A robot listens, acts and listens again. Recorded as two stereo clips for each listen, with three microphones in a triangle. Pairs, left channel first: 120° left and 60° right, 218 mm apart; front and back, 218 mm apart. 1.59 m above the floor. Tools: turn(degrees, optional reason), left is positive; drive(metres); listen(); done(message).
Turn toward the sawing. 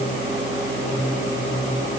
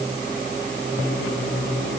listen()
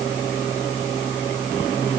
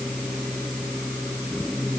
listen()
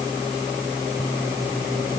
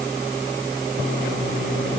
done("I can't make out sawing to turn to.")